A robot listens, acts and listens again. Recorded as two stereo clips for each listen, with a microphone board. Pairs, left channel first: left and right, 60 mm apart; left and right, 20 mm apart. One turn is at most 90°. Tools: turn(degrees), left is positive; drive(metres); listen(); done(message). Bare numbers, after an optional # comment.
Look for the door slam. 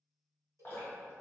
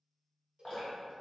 listen()
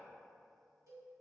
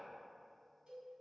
listen()
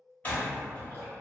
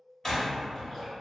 # The door slam: about 30° left or 150° left.
turn(30)
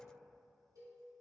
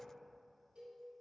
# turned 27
listen()
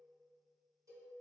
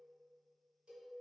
done("I heard a door slam, but can't make it out now. It was about straight ahead or 125° left.")